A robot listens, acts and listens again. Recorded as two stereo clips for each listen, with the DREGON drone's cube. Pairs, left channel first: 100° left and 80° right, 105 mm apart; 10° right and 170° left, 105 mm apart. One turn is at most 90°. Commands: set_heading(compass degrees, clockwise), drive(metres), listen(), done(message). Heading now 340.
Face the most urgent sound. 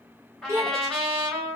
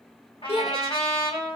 set_heading(0)
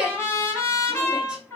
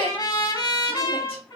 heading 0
done("Facing the shout.")